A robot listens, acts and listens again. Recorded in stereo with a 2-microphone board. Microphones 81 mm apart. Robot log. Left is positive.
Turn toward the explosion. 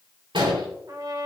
cmd yaw -90
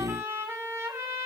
end: I heard an explosion from this way, but can't make it out now.